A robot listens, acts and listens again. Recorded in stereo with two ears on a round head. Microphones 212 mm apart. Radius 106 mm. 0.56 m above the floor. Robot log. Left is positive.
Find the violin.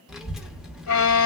note: The violin: about 60° left or 120° left.
cmd yaw +60
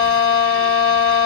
note: So it is at 60° left.
cmd yaw +60
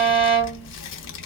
end: Facing the violin, 1 to 2 m away.